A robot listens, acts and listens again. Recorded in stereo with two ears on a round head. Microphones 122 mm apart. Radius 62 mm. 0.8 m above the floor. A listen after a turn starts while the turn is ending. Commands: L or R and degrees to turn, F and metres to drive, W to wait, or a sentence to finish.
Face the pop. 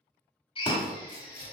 L30
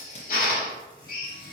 W
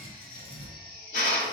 I heard a pop, but can't make it out now. It was about straight ahead or 120° left.